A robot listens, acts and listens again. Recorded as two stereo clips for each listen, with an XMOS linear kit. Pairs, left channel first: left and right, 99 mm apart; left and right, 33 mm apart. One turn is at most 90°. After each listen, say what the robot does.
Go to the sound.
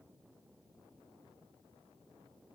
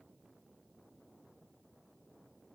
Keep listening.
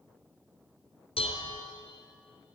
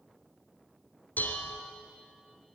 Turn 75° left.
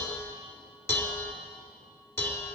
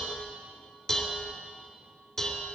Turn 25° left.
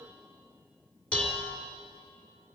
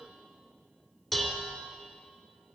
Turn 15° left.
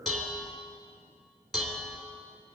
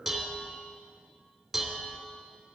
Drive 1.0 m forward.
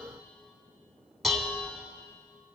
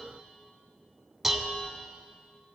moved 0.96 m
Drive 1.0 m forward.
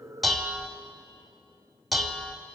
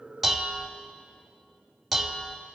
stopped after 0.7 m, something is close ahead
Arrived at the dishes clattering, straight ahead.